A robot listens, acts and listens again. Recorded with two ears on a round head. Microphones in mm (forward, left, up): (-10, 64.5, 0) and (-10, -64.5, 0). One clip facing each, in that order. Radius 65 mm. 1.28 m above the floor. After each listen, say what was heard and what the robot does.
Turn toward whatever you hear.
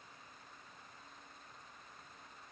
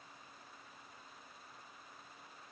Keep listening.
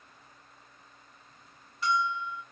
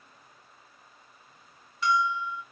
The bell: about 60° right or 120° right. Turn 60° right.
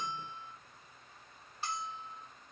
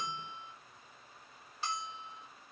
So it is at 60° right. Turn 60° right.
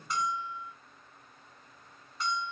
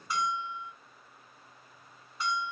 Facing the bell.